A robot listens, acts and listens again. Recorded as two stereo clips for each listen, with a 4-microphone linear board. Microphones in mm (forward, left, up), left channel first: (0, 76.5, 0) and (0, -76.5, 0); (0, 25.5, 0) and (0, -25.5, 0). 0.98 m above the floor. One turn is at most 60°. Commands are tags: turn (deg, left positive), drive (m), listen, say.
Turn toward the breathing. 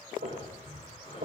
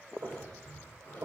<turn deg="40"/>
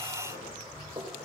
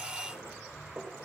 <turn deg="60"/>
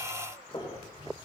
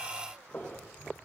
<turn deg="35"/>
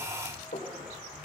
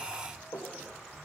<say>Found it: breathing, straight ahead, over 4 m away.</say>